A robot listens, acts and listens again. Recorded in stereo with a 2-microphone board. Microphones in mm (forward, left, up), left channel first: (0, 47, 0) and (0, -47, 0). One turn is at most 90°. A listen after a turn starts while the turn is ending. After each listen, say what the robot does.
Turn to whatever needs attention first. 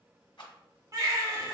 Turn 40° right.
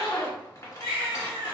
Turn 90° right.
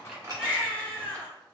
Turn 15° left.
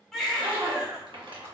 Found it: a baby crying, straight ahead.